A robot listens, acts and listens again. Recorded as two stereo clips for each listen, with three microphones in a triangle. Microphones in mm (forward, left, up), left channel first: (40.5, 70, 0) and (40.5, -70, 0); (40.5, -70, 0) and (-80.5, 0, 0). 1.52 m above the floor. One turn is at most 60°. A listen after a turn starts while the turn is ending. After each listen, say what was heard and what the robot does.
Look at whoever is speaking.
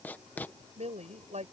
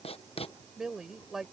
The woman speaking: 120° right. Turn 60° right.
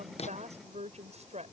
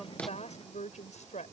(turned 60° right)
The woman speaking is now 55° right. Turn 55° right.
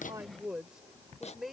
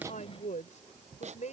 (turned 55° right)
Found it: a woman speaking, straight ahead.